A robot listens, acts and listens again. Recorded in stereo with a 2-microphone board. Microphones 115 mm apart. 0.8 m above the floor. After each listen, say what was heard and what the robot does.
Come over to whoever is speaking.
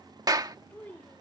Turn 30° left.
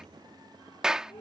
Keep listening.
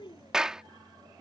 So it is at 135° left. Turn 135° left.
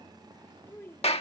The child speaking is now 20° left. Turn 20° left.
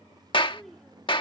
Keep listening.
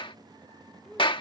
Keep listening.
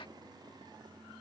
I heard a child speaking from this way, but can't make it out now. I did not reach it.